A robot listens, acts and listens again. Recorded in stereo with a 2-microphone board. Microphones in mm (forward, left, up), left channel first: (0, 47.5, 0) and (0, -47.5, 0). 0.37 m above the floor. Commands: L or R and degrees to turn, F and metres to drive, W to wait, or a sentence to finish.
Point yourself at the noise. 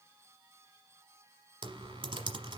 R70
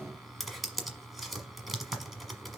Facing the typing on a keyboard.